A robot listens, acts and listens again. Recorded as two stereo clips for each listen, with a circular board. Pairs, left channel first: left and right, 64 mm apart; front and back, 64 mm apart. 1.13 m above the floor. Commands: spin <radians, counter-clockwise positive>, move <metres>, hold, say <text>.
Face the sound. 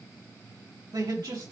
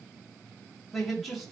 spin -1.57
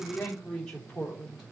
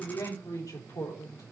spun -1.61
say Facing the man speaking, 2 to 4 m away.